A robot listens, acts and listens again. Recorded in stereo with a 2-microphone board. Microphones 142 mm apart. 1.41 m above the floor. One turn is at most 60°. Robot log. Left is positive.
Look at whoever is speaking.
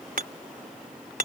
cmd idle
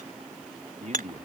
note: The man speaking: about 55° right or 125° right.
cmd yaw -55
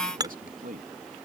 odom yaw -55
note: So it is at 75° right.
cmd yaw -60
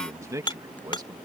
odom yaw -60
note: The man speaking is now 25° right.
cmd yaw -25
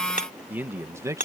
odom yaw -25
note: The man speaking is now 20° right.
cmd yaw -20
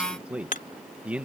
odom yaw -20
note: The man speaking is now 10° right.
cmd yaw -10
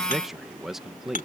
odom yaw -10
end: Found it: a man speaking, straight ahead.